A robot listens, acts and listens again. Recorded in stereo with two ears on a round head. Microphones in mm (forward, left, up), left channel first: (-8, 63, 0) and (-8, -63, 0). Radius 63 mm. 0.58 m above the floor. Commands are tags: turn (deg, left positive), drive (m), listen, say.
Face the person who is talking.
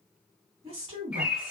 <turn deg="-45"/>
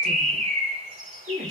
<turn deg="-75"/>
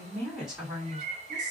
<say>Facing the woman speaking, 1 to 2 m away.</say>